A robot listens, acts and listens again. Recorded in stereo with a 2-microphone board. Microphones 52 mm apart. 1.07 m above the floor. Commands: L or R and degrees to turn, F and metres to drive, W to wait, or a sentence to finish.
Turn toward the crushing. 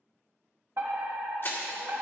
L45
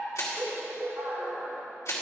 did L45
L80
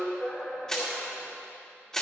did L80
L10
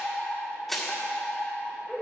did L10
Facing the crushing, 2 to 4 m away.